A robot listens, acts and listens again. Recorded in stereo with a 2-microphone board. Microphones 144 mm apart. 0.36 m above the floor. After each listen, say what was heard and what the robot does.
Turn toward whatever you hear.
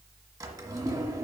The drawer: about 25° right or 155° right. Turn 25° right.
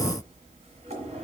So it is at 130° right. Turn 130° right.
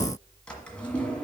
The drawer is now 10° left. Turn 10° left.
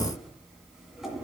Facing the drawer.